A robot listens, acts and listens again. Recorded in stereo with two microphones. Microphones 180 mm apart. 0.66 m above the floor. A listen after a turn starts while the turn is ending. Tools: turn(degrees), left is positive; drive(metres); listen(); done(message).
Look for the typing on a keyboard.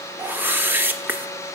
listen()
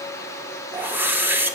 listen()
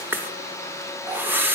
done("I can't make out typing on a keyboard, only a whoosh.")